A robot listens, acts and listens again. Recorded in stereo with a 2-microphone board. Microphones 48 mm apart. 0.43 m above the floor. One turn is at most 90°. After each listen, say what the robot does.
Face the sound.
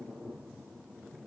Keep listening.
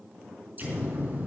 Turn 35° right.
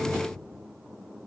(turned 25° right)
Keep listening.
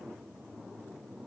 I heard an explosion, but can't make it out now. It was about 10° right or 120° right.